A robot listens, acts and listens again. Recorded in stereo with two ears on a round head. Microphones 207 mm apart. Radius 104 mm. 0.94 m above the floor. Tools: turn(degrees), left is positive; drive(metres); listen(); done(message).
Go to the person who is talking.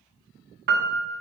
listen()
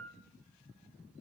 listen()
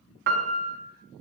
done("I can't make out anyone speaking, only a piano.")